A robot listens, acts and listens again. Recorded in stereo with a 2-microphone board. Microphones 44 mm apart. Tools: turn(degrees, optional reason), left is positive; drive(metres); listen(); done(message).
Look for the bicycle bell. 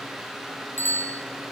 turn(degrees=60, reason="The bicycle bell: about 60° left or 120° left.")
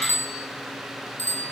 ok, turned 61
turn(degrees=60, reason="So it is at 60° left.")
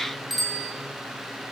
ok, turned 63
done("Found it: a bicycle bell, straight ahead, over 4 m away.")